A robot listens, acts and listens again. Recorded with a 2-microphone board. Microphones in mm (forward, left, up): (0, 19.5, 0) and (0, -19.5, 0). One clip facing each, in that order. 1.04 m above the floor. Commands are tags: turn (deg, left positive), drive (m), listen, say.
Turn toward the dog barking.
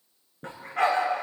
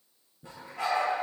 <turn deg="90"/>
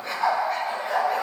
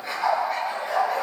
<say>Facing the dog barking.</say>